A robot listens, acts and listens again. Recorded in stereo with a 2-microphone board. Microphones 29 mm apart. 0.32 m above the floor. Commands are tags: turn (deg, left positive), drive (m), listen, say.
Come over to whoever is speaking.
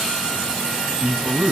<turn deg="-45"/>
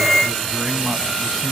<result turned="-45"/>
<listen/>
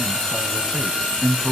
<turn deg="-10"/>
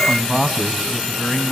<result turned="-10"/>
<drive m="1.0"/>
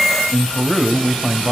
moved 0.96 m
<drive m="1.0"/>
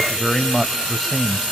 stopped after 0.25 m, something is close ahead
<say>Arrived at the man speaking, straight ahead.</say>